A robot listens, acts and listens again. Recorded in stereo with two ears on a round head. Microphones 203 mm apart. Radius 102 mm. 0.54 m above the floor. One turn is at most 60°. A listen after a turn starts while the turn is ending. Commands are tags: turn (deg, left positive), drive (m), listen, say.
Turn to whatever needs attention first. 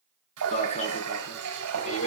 <turn deg="30"/>
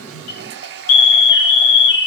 <turn deg="60"/>
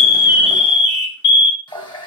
<turn deg="50"/>
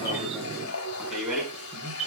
<say>Facing the alarm, over 4 m away.</say>